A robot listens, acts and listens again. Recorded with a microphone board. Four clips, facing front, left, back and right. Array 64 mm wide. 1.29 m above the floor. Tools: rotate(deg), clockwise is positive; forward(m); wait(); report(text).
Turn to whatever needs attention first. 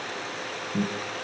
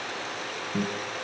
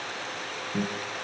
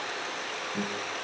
wait()
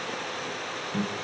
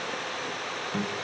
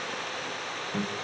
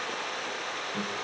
wait()
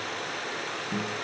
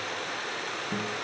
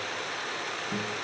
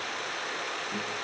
report("I can't make out anything urgent to turn to.")